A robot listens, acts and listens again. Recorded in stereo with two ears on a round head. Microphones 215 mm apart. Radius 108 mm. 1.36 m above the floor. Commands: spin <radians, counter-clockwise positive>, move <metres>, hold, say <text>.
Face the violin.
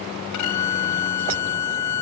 spin 1.57
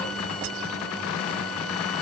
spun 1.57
hold
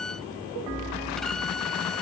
say Facing the violin.